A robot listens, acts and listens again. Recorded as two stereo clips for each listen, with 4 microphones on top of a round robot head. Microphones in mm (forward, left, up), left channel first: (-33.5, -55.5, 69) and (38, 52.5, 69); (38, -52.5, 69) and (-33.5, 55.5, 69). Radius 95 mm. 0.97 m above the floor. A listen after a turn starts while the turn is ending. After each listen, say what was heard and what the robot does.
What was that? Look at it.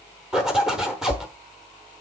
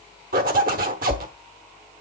The zipper: 140° left. Turn 140° left.
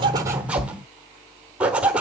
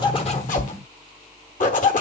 The zipper is now 25° right. Turn 25° right.
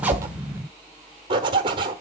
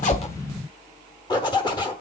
Facing the zipper, 1 to 2 m away.